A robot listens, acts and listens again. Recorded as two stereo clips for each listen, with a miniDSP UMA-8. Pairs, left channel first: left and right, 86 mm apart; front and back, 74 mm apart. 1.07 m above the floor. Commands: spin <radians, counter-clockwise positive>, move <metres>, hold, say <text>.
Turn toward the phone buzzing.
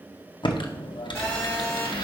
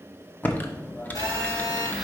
spin 0.44
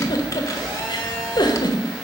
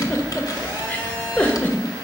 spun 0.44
say Found it: a phone buzzing, straight ahead.